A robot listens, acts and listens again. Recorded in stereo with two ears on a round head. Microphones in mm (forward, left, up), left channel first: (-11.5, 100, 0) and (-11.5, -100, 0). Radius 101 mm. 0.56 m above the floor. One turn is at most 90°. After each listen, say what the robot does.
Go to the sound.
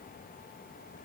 Keep listening.
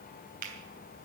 Turn 40° right.
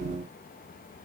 Keep listening.
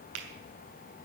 Turn 90° right.
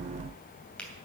Drive 1.0 m forward.
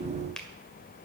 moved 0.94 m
Drive 1.0 m forward.
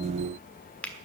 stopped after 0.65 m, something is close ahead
Turn 10° left.
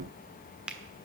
I am next to the finger snap.